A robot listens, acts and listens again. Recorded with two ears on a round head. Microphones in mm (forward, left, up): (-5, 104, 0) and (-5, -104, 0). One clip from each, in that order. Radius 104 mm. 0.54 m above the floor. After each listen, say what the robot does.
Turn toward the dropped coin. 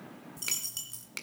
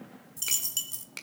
Turn 25° right.
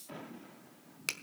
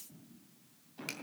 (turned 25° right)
Keep listening.
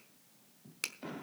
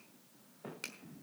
I heard a dropped coin, but can't make it out now. It was about straight ahead or 130° right.